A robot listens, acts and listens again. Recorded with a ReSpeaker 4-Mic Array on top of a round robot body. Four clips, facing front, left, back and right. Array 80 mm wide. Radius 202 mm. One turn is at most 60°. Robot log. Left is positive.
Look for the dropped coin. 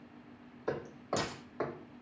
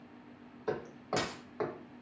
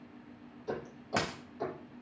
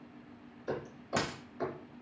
note: The dropped coin: 175° right.
cmd yaw -60
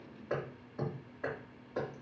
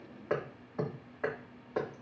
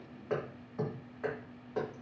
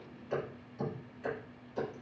note: Nothing new. It was at 115° right.
cmd yaw -60
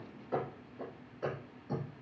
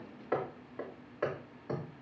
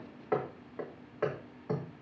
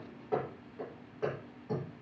note: Nothing new. It was at 55° right.
cmd yaw -55
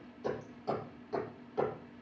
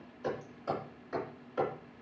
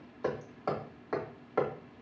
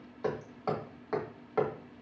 end: Facing where the dropped coin came from. I can't hear it now.